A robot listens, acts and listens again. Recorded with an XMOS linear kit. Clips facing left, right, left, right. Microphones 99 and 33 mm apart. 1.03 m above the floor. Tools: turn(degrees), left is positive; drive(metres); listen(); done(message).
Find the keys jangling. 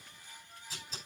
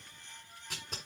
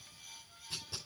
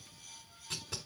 listen()
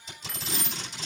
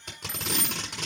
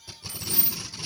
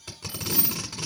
turn(degrees=-30)
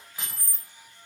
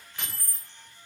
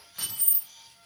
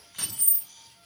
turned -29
turn(degrees=20)
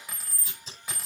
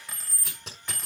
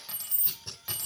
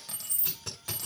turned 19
turn(degrees=10)
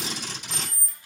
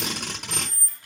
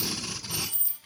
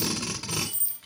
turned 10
done("Facing the keys jangling.")